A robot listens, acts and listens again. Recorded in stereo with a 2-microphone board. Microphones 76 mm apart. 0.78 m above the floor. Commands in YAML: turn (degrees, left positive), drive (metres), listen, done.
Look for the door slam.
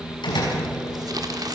turn: 90
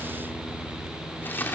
done: "Facing where the door slam came from. I can't hear it now."